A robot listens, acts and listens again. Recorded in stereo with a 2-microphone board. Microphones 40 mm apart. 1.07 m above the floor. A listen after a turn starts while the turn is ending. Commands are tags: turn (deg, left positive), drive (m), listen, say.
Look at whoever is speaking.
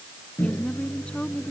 <turn deg="30"/>
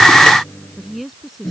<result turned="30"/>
<say>Facing the woman speaking.</say>